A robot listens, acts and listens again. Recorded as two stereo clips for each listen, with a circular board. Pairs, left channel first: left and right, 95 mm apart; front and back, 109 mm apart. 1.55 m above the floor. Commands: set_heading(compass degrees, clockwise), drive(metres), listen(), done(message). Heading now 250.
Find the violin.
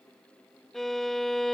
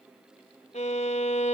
done("Found it: a violin, straight ahead.")